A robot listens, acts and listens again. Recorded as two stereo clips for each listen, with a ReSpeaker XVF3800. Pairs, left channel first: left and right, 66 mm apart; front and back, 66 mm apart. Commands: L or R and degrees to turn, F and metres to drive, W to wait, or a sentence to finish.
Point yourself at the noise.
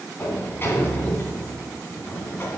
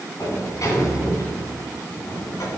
L30
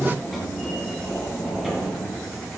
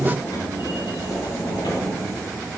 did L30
Found it: a sliding door, straight ahead.